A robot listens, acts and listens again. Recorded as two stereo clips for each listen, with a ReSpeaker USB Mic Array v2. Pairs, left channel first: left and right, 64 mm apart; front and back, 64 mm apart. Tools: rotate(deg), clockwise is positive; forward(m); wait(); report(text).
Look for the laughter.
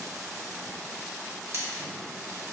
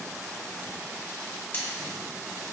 wait()
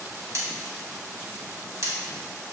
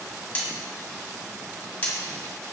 wait()
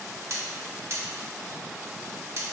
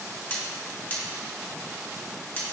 report("I can't make out laughter to turn to.")